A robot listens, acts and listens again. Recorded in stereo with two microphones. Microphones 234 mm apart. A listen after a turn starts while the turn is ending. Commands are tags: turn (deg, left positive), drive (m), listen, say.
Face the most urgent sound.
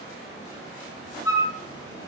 <listen/>
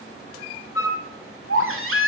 <turn deg="-65"/>
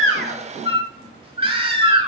<turn deg="-25"/>
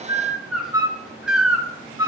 <say>Facing the baby crying.</say>